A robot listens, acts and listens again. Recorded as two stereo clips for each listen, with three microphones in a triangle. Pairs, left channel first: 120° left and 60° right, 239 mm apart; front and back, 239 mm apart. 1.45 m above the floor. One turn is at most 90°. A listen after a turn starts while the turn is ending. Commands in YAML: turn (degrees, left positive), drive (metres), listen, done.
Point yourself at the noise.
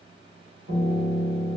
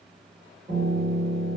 turn: -90
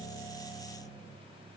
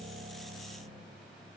turn: -15
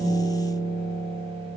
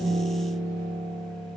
done: "Facing the piano, 1 to 2 m away."